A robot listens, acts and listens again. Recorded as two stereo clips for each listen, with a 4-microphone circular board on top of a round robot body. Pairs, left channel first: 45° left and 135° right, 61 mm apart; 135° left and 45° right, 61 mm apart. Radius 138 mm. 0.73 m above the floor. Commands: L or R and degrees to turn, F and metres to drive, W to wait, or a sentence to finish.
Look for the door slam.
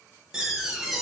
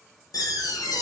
L140
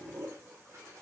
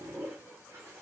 Facing where the door slam came from. I can't hear it now.